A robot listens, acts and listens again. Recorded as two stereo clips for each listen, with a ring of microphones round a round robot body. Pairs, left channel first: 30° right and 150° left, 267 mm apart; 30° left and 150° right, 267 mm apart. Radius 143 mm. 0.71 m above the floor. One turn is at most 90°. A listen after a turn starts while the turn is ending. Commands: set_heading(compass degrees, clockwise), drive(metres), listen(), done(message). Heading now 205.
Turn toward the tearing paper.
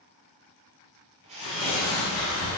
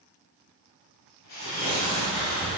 set_heading(245)
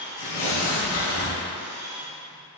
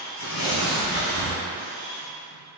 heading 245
done("Facing the tearing paper, 1 to 2 m away.")